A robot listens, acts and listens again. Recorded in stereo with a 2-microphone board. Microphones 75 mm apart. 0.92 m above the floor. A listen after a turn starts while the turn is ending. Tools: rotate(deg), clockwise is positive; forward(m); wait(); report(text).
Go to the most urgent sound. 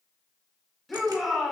rotate(-30)
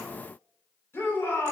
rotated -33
rotate(-145)
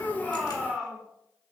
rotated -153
rotate(10)
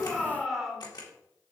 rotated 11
forward(1.0)
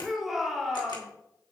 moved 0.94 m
forward(1.0)
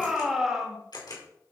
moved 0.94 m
forward(1.0)
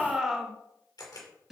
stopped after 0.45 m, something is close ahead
rotate(10)
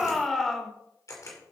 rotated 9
report("I am next to the shout.")